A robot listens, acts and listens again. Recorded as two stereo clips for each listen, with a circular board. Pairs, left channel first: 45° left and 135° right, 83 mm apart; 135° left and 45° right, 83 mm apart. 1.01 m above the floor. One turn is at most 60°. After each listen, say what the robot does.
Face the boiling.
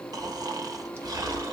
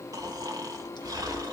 Keep listening.
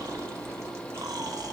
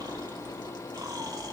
Keep listening.
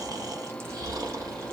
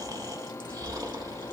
I can't make out boiling, only snoring.